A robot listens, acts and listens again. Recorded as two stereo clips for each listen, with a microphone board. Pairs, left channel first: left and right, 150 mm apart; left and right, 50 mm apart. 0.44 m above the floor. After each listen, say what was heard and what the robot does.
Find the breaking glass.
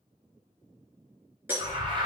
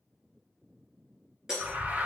Turn 30° right.
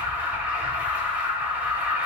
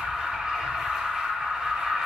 Keep listening.
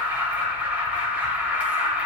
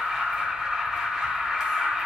I heard breaking glass, but can't make it out now. It was about 15° left or 135° right.